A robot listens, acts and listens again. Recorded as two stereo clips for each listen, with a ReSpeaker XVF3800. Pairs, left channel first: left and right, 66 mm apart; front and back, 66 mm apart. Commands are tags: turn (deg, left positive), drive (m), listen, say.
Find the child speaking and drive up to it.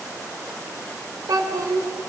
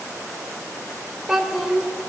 <turn deg="-95"/>
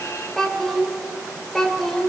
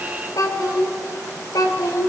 <drive m="1.0"/>
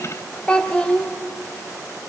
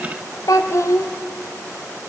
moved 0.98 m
<turn deg="20"/>
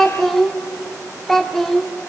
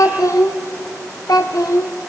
<drive m="1.0"/>
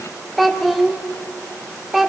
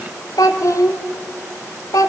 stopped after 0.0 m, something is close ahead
<say>Arrived at the child speaking, straight ahead.</say>